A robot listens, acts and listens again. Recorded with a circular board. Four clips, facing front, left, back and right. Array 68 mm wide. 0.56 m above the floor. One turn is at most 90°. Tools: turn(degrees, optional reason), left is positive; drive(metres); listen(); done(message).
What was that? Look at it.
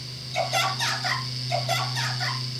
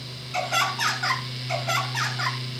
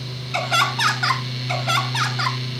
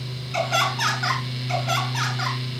turn(degrees=90, reason="The laughter: straight behind.")
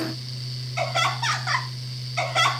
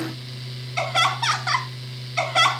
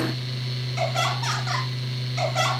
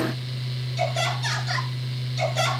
turn(degrees=70, reason="The laughter is now 70° left.")
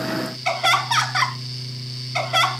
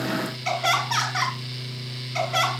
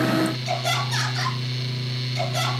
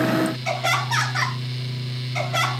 done("Found it: laughter, straight ahead, over 4 m away.")